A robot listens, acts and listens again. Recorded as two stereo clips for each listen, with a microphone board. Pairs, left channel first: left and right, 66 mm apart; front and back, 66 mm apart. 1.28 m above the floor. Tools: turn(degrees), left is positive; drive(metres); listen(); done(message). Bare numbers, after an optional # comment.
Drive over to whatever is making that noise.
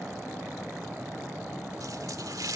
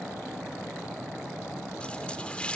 # The running tap: 70° right.
turn(-70)
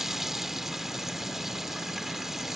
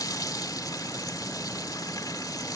drive(1.0)
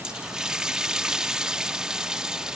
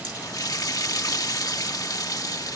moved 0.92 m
# The running tap is now 10° right.
turn(-10)
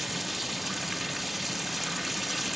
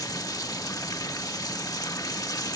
drive(1.0)
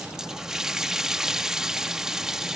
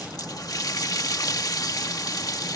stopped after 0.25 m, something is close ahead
# The running tap is now 10° right.
turn(-10)
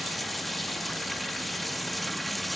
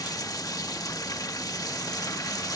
done("Arrived at the running tap, straight ahead.")